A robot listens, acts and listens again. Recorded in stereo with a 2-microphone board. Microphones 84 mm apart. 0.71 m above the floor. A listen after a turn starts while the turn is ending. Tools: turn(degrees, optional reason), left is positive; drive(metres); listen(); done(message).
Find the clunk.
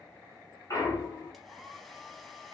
turn(degrees=40, reason="The clunk: about 40° left or 140° left.")
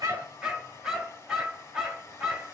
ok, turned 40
listen()
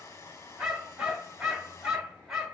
done("I heard a clunk, but can't make it out now. It was about straight ahead or 100° left.")